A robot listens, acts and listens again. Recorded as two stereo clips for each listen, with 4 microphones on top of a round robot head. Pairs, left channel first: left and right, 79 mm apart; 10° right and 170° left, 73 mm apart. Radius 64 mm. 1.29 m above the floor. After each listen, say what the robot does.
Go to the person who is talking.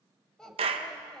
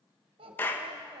Turn 175° left.
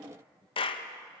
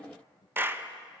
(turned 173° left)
Drive 1.0 m forward.
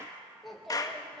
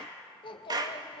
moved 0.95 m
Drive 1.0 m forward.
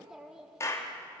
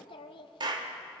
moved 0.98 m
Drive 1.0 m forward.
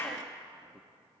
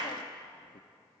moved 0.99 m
Keep listening.
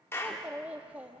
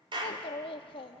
Turn 10° right.
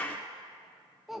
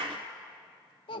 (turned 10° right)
Drive 1.0 m forward.
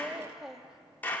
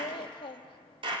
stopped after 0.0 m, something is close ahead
I am next to the child speaking.